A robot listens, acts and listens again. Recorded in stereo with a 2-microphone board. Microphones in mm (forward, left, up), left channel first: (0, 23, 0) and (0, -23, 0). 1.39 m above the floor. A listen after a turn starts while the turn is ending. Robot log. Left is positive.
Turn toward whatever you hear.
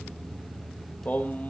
note: The singing: about 35° left or 145° left.
cmd yaw +35
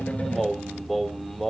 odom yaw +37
end: Found it: singing, straight ahead, 1 to 2 m away.